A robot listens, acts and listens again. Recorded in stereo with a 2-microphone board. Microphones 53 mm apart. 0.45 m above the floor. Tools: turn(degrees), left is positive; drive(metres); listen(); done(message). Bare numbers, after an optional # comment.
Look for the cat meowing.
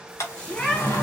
turn(30)
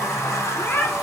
# So it is at 135° left.
turn(135)
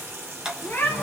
# The cat meowing is now 45° left.
turn(45)
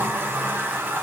listen()
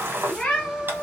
# The cat meowing is now 15° left.
turn(15)
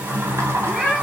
done("Found it: a cat meowing, straight ahead, 1 to 2 m away.")